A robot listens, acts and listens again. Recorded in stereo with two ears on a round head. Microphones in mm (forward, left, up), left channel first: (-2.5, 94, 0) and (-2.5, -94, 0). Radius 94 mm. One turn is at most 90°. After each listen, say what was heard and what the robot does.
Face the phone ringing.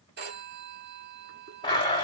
The phone ringing: about 50° right or 130° right. Turn 50° right.
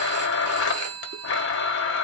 So it is at 80° right. Turn 80° right.
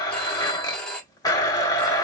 Found it: a phone ringing, straight ahead, 1 to 2 m away.